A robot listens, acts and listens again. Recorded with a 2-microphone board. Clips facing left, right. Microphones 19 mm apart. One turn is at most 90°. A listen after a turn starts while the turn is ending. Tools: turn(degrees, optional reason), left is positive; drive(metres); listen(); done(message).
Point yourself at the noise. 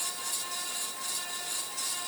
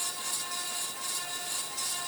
listen()
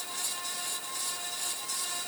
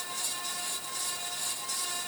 listen()
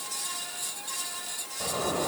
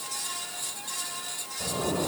turn(degrees=35, reason="The zipper: about 35° left or 145° left.")
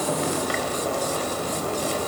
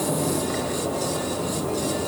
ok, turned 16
turn(degrees=90, reason="So it is at 125° left.")
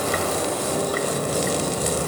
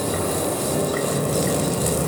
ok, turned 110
turn(degrees=15, reason="The zipper is now 15° left.")
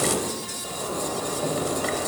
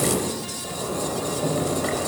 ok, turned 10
done("Found it: a zipper, straight ahead, 2 to 4 m away.")